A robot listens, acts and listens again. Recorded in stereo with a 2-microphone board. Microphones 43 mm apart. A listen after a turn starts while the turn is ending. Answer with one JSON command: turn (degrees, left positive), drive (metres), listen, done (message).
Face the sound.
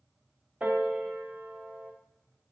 {"turn": -35}
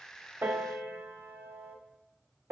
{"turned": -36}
{"turn": -105}
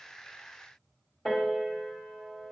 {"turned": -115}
{"turn": 10}
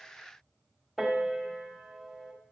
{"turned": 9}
{"done": "Found it: a piano, straight ahead, 1 to 2 m away."}